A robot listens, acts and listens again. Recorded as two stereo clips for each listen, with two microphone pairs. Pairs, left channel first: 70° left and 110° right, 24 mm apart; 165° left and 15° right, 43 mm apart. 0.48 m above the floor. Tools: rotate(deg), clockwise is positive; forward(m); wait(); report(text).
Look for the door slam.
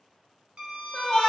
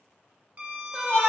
wait()
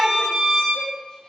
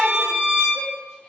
wait()
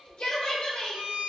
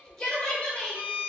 report("I can't make out a door slam to turn to.")